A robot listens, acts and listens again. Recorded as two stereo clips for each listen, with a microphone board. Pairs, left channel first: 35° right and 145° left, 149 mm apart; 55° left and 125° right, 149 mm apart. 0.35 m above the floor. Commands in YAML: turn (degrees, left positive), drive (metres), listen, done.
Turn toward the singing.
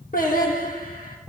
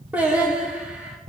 turn: -40
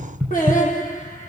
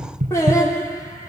turn: -10
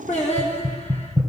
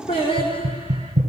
done: "Found it: singing, straight ahead, over 4 m away."